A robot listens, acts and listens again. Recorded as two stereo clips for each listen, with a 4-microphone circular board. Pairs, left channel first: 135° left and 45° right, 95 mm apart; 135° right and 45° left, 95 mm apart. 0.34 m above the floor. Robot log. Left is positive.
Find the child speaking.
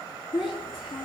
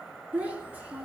note: The child speaking: 115° left.
cmd yaw +115
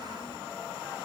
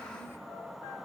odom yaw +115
cmd idle
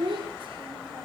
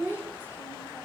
note: The child speaking is now 25° right.
cmd yaw -25
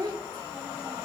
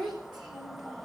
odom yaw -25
end: Facing the child speaking, over 4 m away.